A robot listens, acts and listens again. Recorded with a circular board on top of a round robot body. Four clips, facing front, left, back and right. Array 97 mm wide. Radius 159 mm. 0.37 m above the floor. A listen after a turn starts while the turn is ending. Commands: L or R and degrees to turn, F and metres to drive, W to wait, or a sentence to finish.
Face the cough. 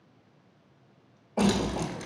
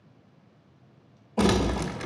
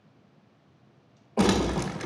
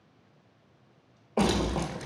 R100
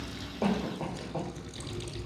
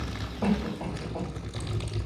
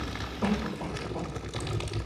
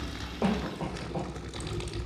R40
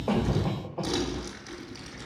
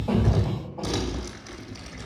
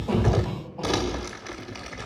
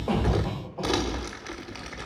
R10
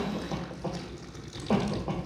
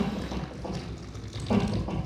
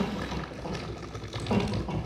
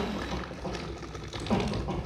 Found it: a cough, straight ahead.